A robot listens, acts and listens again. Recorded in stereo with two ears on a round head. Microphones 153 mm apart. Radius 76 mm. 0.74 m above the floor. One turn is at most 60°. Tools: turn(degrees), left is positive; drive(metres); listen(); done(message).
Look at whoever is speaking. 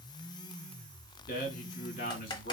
turn(degrees=55)
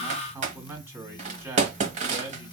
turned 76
turn(degrees=-15)
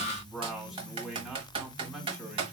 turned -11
done("Facing the man speaking.")